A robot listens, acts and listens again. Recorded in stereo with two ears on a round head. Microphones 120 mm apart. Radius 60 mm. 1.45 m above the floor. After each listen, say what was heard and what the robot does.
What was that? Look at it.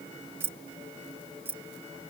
The keys jangling: about 15° right or 165° right. Turn 15° right.
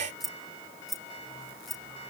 Turn 30° left.
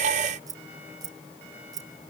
So it is at 30° right. Turn 30° right.
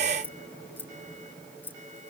The keys jangling is now 15° left. Turn 15° left.
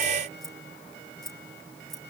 Facing the keys jangling.